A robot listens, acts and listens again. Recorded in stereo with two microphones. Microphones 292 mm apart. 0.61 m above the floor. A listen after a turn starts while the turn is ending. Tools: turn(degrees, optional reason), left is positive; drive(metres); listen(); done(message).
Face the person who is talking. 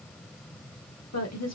turn(degrees=60, reason="The woman speaking: about 60° left or 120° left.")
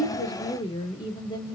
turn(degrees=15, reason="So it is at 15° left.")
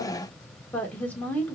done("Found it: a woman speaking, straight ahead.")